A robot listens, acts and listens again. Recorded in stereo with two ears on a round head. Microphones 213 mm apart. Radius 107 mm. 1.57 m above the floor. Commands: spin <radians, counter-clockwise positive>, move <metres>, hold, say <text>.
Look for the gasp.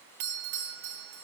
hold
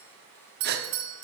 spin -0.79
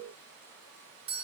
hold
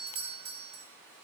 say I heard a gasp, but can't make it out now. It was about straight ahead or 90° right.